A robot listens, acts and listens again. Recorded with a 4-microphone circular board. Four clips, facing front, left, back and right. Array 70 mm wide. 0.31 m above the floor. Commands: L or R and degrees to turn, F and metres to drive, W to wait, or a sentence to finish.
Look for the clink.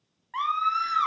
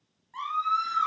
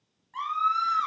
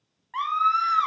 W
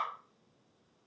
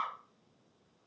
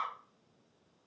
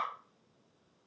W
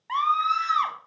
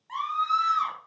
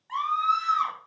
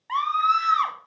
I can't make out a clink to turn to.